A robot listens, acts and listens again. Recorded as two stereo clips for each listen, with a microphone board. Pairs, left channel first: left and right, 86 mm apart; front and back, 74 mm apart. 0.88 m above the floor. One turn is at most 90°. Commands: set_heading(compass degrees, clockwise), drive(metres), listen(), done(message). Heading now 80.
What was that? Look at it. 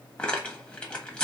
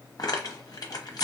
set_heading(65)
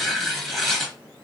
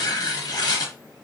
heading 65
done("Found it: tearing paper, straight ahead, 1 to 2 m away.")